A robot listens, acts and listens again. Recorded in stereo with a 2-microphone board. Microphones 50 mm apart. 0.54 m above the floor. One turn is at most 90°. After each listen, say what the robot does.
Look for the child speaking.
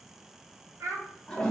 Turn 90° right.
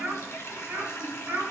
Turn 50° right.
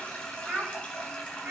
Turn 30° right.
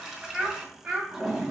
Turn 10° right.
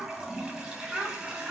Facing the child speaking, 1 to 2 m away.